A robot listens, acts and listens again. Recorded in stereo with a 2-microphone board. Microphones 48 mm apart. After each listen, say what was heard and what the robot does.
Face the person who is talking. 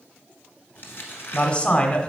The man speaking: about 25° left or 155° left. Turn 25° left.
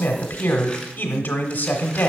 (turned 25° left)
So it is at 125° left. Turn 125° left.
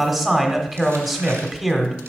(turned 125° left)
Facing the man speaking, 1 to 2 m away.